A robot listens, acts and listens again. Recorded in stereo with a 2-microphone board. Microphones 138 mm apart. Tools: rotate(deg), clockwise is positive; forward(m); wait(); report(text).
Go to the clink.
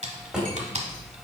rotate(90)
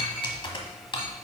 wait()
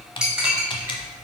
forward(1.0)
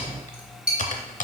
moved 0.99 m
forward(1.0)
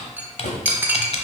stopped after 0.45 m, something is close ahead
rotate(15)
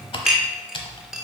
report("I am next to the clink.")